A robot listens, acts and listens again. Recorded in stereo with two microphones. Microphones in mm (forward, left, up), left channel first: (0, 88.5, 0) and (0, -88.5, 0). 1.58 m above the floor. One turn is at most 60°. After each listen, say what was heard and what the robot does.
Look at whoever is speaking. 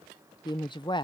The woman speaking: about 25° left or 155° left. Turn 25° left.
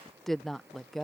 Facing the woman speaking.